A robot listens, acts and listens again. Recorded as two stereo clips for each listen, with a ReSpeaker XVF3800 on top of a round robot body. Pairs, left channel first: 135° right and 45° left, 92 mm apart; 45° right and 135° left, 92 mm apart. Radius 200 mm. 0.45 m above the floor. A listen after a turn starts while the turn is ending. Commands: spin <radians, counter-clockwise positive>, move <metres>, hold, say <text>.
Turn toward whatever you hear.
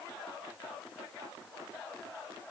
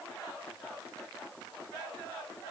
hold
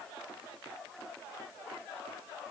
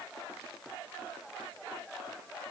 hold
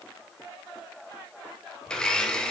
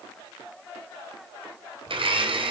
spin 2.53
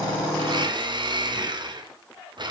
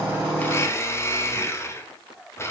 spin 0.26
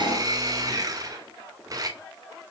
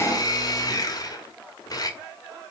say Found it: a blender, straight ahead, 2 to 4 m away.